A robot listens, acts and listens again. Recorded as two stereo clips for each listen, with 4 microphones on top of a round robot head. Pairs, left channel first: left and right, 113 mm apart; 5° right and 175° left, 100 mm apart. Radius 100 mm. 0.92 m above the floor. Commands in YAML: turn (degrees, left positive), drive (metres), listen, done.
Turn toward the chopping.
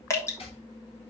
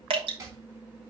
turn: 120
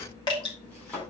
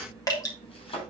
turn: 10
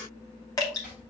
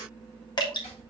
listen: true
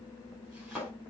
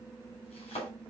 done: "Facing the chopping."